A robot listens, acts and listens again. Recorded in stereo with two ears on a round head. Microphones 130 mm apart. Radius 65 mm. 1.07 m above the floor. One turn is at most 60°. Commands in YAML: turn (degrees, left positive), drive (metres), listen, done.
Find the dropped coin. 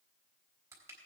listen: true
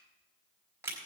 listen: true
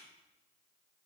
done: "I can't make out a dropped coin to turn to."